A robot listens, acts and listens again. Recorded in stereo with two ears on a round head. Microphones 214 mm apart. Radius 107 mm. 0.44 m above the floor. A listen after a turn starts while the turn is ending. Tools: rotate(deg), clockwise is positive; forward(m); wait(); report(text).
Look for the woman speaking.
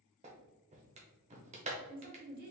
rotate(40)
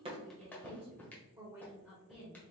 report("Facing the woman speaking, 1 to 2 m away.")